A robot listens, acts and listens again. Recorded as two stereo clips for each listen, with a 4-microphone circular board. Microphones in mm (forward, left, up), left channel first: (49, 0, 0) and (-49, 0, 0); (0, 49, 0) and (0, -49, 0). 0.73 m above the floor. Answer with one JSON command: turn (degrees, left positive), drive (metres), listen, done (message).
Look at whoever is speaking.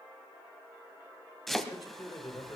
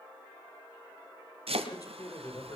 {"turn": 40}
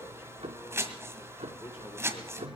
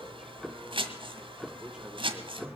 {"listen": true}
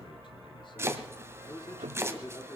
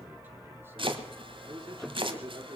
{"turn": -45}
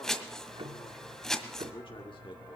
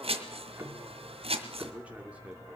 {"turn": -15}
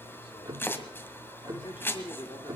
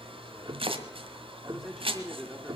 {"done": "Found it: a man speaking, straight ahead."}